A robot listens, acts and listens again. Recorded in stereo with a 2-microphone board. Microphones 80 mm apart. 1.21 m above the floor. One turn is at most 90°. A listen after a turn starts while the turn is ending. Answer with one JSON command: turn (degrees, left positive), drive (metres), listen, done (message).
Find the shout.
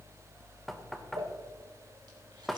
{"listen": true}
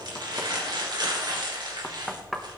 {"listen": true}
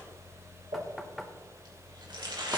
{"done": "I can't make out a shout to turn to."}